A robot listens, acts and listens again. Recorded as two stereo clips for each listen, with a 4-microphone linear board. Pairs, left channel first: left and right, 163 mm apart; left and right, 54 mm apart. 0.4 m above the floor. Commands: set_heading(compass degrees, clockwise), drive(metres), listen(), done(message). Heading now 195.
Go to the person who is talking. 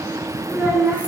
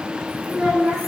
set_heading(225)
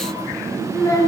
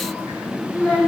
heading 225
set_heading(205)
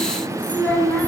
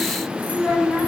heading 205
set_heading(190)
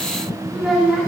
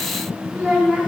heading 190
drive(1.0)
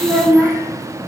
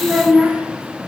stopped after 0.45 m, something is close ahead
set_heading(200)
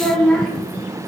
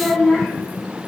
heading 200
done("Something is in my way. I am facing the child speaking but have not reached it.")